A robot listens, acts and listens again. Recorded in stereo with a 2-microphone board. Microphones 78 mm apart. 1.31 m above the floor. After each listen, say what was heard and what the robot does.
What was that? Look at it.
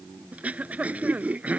The throat clearing: about 20° right or 160° right. Turn 20° right.
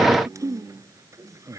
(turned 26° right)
So it is at 135° right. Turn 135° right.
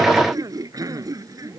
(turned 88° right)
The throat clearing is now 50° right. Turn 50° right.
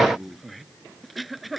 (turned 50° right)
Found it: throat clearing, straight ahead.